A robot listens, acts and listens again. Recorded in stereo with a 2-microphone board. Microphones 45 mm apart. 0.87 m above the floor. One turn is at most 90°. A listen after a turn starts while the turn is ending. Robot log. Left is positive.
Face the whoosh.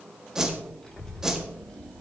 cmd yaw -30
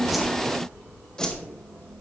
note: So it is at 20° left.
cmd yaw +20
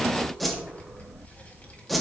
end: Found it: a whoosh, straight ahead, 1 to 2 m away.